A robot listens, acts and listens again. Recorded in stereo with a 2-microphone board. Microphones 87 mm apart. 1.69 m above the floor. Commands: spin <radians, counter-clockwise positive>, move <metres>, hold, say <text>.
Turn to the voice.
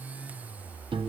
hold
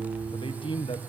spin 1.57
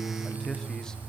hold
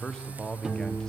say Found it: a man speaking, straight ahead.